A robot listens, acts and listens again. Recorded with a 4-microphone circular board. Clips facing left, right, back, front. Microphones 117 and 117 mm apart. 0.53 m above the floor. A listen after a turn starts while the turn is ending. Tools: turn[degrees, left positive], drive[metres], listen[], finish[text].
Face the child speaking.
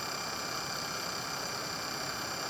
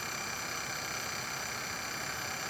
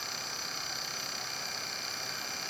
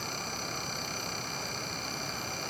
Action: listen[]
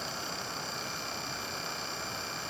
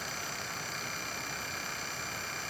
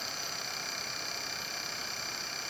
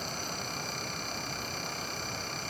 Action: listen[]
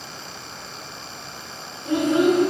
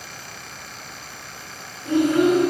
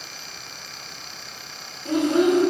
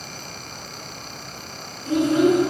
Thought: The child speaking: 160° left.
Action: turn[160]
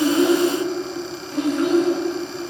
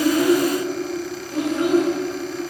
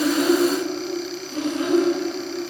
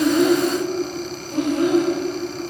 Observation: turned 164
Action: finish[Found it: a child speaking, straight ahead, 1 to 2 m away.]